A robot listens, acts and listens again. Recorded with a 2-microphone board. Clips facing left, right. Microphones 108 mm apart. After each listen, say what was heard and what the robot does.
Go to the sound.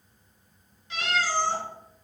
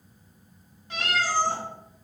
The cat meowing: about 45° right or 135° right. Turn 45° right.
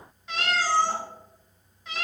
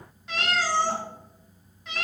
Drive 1.0 m forward.
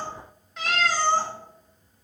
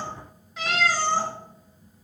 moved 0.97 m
Drive 1.0 m forward.
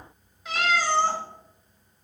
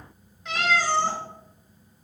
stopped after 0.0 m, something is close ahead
I am next to the cat meowing.